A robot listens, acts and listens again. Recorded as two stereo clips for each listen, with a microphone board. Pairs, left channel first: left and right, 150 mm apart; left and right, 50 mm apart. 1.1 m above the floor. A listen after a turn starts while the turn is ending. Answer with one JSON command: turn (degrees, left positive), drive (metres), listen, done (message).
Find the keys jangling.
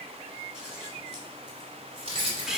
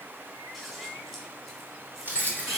{"turn": -40}
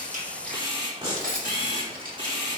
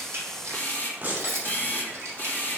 {"turn": -100}
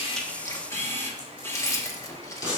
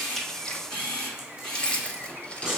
{"turn": 25}
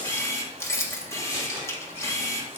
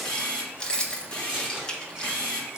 {"turn": 20}
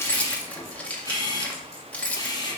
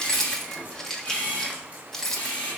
{"turn": 10}
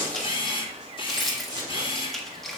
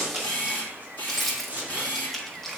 {"done": "Found it: keys jangling, straight ahead, 1 to 2 m away."}